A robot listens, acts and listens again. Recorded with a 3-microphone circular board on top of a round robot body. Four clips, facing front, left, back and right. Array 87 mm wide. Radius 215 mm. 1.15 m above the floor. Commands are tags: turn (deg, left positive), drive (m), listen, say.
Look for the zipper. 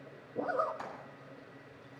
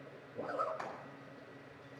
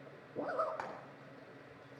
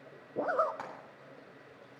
<turn deg="-75"/>
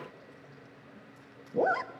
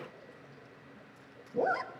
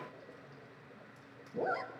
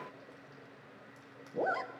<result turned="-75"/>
<say>Found it: a zipper, straight ahead.</say>